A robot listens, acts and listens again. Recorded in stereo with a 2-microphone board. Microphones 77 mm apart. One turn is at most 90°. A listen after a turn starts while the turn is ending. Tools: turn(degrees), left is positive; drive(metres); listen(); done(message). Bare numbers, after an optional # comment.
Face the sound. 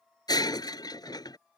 # The breaking glass: about 60° left or 120° left.
turn(60)
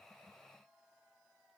listen()
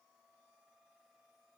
done("I heard breaking glass, but can't make it out now. It was about straight ahead or 60° left.")